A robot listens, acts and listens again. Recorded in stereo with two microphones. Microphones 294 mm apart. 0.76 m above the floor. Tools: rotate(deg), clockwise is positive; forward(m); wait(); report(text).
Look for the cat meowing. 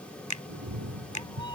rotate(90)
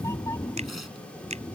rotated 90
rotate(-10)
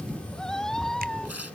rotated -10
report("Found it: a cat meowing, straight ahead.")